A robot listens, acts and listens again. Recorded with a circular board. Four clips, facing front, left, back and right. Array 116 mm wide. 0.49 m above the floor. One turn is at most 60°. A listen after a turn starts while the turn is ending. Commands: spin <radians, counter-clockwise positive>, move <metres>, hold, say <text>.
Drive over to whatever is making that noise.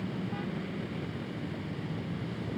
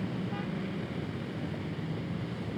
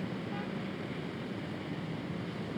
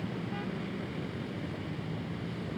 hold
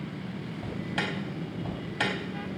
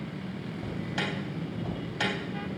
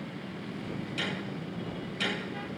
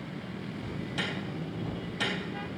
spin 0.35
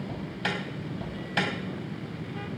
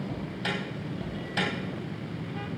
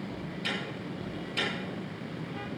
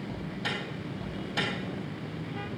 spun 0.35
move 1.0
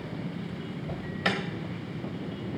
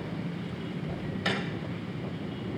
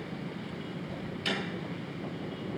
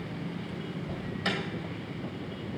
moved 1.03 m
move 1.0
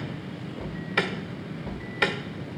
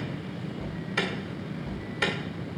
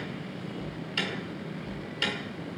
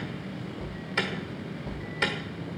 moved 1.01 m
spin -0.17
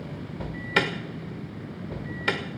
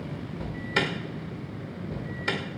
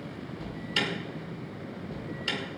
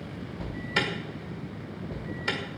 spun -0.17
move 1.0
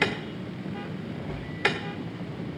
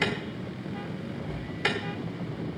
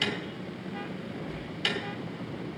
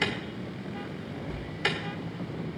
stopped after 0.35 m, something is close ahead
say I am next to the alarm.